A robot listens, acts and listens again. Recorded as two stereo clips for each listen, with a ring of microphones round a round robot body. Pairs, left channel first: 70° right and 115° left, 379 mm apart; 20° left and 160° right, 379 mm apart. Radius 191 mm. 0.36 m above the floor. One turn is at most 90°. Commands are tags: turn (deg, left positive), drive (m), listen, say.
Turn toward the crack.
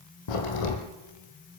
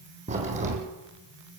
<turn deg="-85"/>
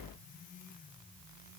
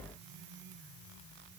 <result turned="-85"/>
<say>I heard a crack from this way, but can't make it out now.</say>